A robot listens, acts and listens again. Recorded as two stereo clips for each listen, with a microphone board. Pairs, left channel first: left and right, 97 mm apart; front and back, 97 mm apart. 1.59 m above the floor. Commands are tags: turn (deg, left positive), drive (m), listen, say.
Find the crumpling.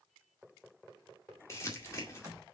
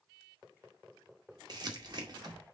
<turn deg="145"/>
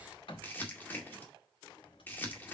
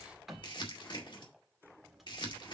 <turn deg="20"/>
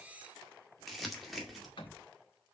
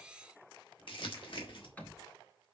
<say>Facing the crumpling, 2 to 4 m away.</say>